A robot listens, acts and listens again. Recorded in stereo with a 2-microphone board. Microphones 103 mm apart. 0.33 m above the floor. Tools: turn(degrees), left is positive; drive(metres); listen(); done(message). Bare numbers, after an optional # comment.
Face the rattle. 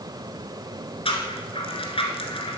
# The rattle: about 70° left or 110° left.
turn(70)
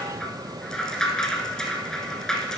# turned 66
done("Found it: a rattle, straight ahead, 1 to 2 m away.")